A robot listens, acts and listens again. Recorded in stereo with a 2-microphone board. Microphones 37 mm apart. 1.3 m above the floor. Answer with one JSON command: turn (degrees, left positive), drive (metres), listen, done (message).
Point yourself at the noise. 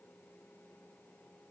{"listen": true}
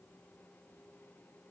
{"listen": true}
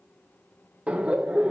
{"turn": -25}
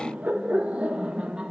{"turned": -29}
{"turn": -25}
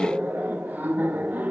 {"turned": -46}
{"turn": -120}
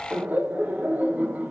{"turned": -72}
{"turn": -50}
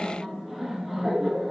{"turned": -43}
{"done": "Facing the laughter."}